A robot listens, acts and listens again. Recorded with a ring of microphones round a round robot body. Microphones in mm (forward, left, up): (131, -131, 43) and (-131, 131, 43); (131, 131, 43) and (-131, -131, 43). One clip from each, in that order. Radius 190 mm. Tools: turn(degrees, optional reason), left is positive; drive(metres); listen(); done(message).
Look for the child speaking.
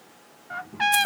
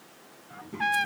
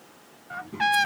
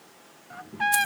turn(degrees=80, reason="The child speaking: 80° left.")
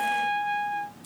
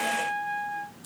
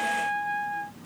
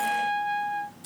turn(degrees=25, reason="The child speaking is now 25° left.")
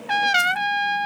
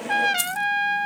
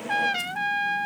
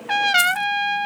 listen()
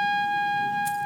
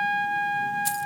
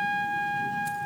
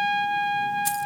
listen()
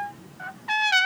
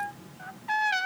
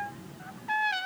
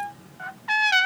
done("Found it: a child speaking, straight ahead.")